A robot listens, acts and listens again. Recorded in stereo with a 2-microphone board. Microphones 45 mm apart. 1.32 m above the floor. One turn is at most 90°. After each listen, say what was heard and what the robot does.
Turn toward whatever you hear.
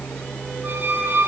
The squeak: about 40° right or 140° right. Turn 40° right.
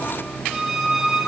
Facing the squeak, over 4 m away.